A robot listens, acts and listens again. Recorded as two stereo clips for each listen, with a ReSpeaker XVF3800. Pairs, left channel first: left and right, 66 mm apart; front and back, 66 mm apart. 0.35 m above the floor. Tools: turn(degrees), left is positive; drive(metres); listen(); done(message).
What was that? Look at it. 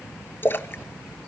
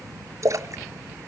turn(degrees=145)
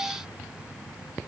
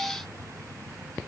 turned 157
turn(degrees=-10)
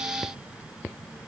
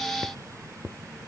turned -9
done("I heard a splash from this way, but can't make it out now.")